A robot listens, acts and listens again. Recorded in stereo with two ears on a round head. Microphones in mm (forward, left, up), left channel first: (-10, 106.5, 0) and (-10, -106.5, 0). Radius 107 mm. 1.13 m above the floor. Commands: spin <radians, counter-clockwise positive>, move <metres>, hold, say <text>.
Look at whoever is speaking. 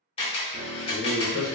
spin -0.26
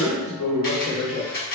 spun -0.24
say Facing the man speaking, 1 to 2 m away.